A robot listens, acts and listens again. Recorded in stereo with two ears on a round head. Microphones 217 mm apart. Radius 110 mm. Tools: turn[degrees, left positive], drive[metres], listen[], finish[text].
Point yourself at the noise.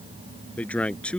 Action: turn[30]
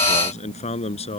Thought: So it is at 155° left.
Action: turn[155]
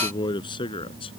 Thought: The man speaking is now 20° left.
Action: turn[20]
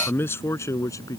Thought: The man speaking is now 15° left.
Action: turn[15]
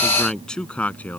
Action: finish[Found it: a man speaking, straight ahead.]